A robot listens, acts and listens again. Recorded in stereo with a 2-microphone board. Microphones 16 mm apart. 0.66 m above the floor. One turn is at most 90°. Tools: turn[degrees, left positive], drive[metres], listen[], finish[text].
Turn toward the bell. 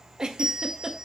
Thought: The bell: about 75° right or 105° right.
Action: turn[-75]
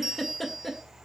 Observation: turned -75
Thought: So it is at 20° right.
Action: turn[-20]
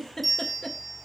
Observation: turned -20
Action: finish[Found it: a bell, straight ahead, 1 to 2 m away.]